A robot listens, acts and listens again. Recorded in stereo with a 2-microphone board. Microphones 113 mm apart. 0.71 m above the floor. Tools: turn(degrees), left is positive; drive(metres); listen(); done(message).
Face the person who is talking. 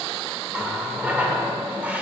listen()
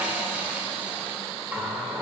listen()
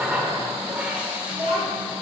turn(degrees=-75)
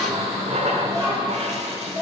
turn(degrees=-30)
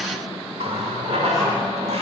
listen()
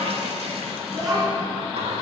done("Found it: a child speaking, straight ahead.")